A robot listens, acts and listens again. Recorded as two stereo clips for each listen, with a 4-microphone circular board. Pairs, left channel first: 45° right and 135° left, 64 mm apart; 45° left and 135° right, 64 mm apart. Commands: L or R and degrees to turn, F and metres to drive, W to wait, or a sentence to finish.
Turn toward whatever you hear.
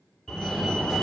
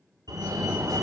R125
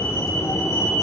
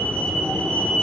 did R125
R20
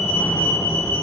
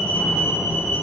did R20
Facing the fire alarm.